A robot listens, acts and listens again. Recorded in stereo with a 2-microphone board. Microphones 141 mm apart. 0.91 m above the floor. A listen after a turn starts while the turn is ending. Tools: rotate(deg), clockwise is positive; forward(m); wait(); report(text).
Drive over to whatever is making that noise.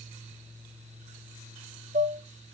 rotate(90)
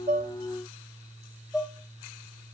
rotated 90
forward(1.0)
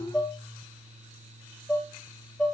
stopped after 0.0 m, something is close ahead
report("Blocked. The dishes clattering is further on, straight ahead.")